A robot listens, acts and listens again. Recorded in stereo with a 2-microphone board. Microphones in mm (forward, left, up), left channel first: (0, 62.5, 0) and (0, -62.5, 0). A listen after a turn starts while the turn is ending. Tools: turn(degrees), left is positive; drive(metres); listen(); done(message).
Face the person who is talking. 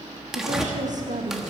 turn(degrees=-90)
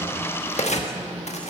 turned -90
listen()
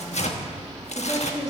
turn(degrees=30)
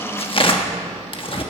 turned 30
listen()
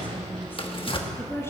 turn(degrees=20)
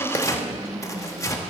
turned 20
done("Facing the woman speaking, 2 to 4 m away.")